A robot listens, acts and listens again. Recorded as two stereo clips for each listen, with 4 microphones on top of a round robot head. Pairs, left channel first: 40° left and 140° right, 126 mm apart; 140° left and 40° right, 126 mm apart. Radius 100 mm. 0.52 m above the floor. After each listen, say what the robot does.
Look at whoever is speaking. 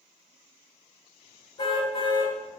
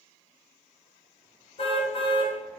Keep listening.
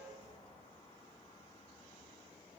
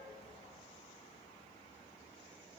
Keep listening.
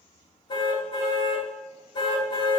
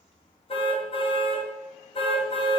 I can't make out anyone speaking, only a car horn.